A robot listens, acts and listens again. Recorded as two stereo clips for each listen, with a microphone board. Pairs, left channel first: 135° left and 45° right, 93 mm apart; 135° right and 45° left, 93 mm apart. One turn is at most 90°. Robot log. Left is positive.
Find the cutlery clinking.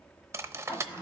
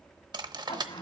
note: The cutlery clinking: 15° left.
cmd yaw +15
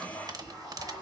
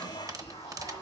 end: Found it: cutlery clinking, straight ahead, under 1 m away.